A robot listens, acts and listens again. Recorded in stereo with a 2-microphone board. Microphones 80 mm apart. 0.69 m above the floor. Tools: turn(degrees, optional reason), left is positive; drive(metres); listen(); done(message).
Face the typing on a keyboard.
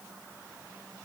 listen()
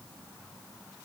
listen()
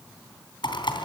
turn(degrees=90)
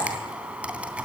turn(degrees=-15, reason="So it is at 15° right.")
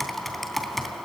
done("Facing the typing on a keyboard.")